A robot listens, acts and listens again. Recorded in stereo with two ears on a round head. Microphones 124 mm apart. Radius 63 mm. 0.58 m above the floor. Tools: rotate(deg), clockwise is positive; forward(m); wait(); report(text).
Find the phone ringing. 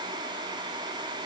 wait()
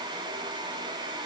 wait()
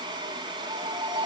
rotate(30)
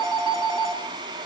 report("Found it: a phone ringing, straight ahead.")